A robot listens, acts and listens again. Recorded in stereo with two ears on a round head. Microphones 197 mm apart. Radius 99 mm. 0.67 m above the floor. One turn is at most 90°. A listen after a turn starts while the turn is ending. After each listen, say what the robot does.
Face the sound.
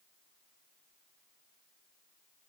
Keep listening.
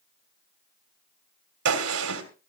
Turn 90° right.
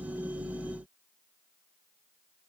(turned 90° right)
I heard a gunshot from this way, but can't make it out now.